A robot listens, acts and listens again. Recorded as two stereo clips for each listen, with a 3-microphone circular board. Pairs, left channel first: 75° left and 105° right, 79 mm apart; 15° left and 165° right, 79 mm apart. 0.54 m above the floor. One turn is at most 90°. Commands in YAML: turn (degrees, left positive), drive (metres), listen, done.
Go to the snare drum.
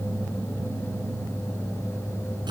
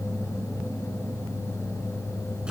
listen: true
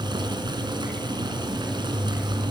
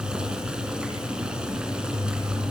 listen: true
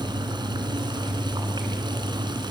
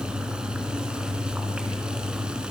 done: "I can't make out a snare drum, only boiling."